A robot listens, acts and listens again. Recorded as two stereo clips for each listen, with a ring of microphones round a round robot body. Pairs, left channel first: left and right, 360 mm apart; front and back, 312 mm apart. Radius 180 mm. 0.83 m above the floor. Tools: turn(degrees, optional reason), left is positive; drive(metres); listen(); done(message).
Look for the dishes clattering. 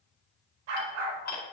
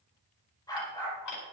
turn(degrees=25, reason="The dishes clattering: 25° left.")
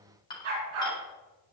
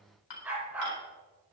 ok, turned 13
turn(degrees=10, reason="The dishes clattering is now 10° left.")
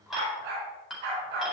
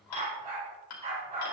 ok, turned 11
done("Found it: dishes clattering, straight ahead.")